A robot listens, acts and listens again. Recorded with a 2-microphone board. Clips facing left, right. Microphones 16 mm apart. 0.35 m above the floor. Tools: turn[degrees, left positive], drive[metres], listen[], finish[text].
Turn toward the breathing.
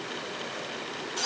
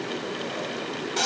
Action: listen[]
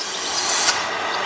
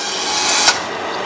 Action: listen[]
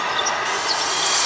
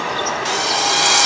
Action: finish[I can't make out breathing, only a bird and a drill.]